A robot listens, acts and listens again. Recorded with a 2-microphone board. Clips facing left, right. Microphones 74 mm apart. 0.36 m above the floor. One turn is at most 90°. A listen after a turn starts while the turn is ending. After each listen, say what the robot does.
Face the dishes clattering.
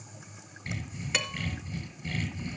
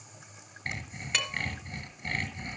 Turn 30° left.
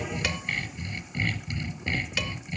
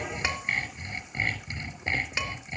Keep listening.
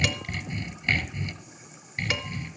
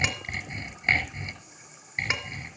Keep listening.
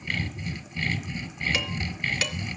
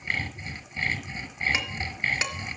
Turn 25° right.
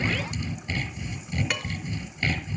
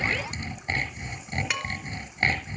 Facing the dishes clattering, 2 to 4 m away.